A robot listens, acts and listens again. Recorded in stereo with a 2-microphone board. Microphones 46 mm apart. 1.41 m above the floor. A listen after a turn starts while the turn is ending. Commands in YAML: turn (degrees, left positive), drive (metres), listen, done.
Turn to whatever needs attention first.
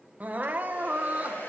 turn: -40
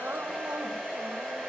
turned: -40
listen: true
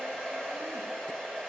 listen: true
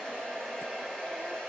done: "I heard crying, but can't make it out now. It was about straight ahead or 100° right."